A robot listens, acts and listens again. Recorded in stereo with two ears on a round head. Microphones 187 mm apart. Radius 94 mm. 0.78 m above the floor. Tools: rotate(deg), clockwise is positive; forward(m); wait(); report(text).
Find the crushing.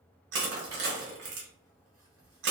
rotate(55)
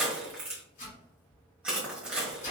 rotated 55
report("Facing the crushing, 1 to 2 m away.")